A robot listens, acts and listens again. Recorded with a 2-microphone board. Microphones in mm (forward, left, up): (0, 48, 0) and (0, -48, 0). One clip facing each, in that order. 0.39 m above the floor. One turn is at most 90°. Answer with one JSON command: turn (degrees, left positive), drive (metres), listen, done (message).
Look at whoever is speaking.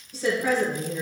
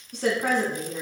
{"turn": -55}
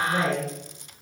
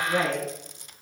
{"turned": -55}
{"turn": -60}
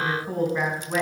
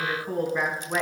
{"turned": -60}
{"done": "Found it: a woman speaking, straight ahead, 2 to 4 m away."}